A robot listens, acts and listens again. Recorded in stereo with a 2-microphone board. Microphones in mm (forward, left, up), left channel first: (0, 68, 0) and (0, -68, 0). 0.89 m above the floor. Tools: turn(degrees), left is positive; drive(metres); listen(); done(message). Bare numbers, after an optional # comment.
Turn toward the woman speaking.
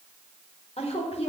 # The woman speaking: about 50° left or 130° left.
turn(50)
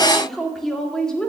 done("Found it: a woman speaking, straight ahead, 1 to 2 m away.")